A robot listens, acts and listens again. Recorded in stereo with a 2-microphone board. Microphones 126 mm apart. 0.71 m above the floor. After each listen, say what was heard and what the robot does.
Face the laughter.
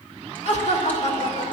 The laughter: about 65° left or 115° left. Turn 65° left.
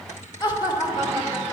So it is at 35° left. Turn 35° left.
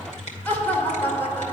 The laughter is now 15° left. Turn 15° left.
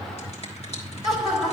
Facing the laughter, 2 to 4 m away.